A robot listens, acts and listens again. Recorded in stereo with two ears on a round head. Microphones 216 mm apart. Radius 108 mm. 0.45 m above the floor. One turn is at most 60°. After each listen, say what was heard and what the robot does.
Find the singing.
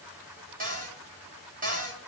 Keep listening.
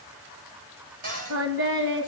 The singing: about 55° right or 125° right. Turn 55° right.
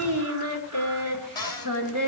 So it is at 75° right. Turn 60° right.
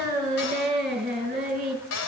The singing is now 35° right. Turn 35° right.
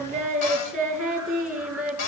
Facing the singing, over 4 m away.